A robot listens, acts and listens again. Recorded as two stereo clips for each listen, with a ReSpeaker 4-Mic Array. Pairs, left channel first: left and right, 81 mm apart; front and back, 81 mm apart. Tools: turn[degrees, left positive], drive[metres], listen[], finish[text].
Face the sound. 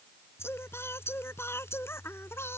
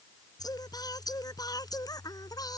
Thought: The singing: 30° left.
Action: turn[30]
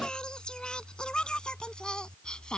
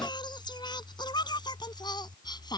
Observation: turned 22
Thought: The singing is now 10° left.
Action: turn[10]
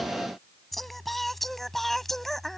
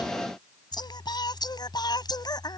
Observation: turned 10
Action: finish[Found it: singing, straight ahead.]